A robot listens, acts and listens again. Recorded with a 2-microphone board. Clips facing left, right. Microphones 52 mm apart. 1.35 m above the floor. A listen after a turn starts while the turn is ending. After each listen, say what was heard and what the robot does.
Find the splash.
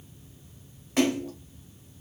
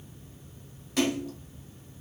The splash: about 35° left or 145° left. Turn 35° left.
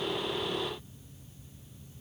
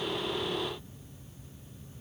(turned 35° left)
Keep listening.
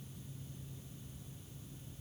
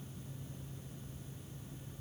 I heard a splash, but can't make it out now. It was about straight ahead or 110° left.